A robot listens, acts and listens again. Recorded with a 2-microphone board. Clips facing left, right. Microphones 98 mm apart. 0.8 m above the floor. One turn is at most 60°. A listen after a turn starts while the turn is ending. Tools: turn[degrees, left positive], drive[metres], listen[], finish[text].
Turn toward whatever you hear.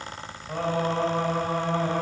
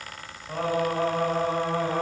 Action: turn[30]
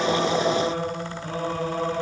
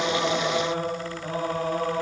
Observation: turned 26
Thought: So it is at 30° right.
Action: turn[-30]
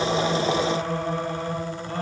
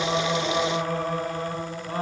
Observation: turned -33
Action: finish[Found it: singing, straight ahead, over 4 m away.]